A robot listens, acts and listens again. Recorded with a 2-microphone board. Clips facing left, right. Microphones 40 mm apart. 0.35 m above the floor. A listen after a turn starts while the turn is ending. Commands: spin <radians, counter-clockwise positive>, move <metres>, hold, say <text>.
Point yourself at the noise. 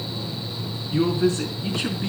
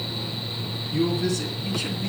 spin 0.70
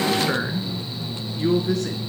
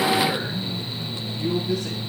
spin 1.75
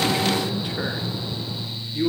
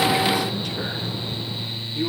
spin 0.26
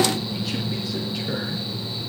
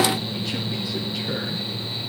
hold
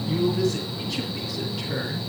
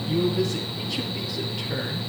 say Found it: a man speaking, straight ahead.